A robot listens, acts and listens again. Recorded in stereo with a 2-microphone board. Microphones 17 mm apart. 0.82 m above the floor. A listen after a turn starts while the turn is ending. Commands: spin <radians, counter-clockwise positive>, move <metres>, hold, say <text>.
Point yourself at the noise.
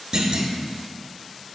spin -0.79
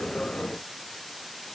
hold
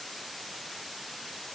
say I heard a clunk, but can't make it out now. It was about straight ahead or 90° right.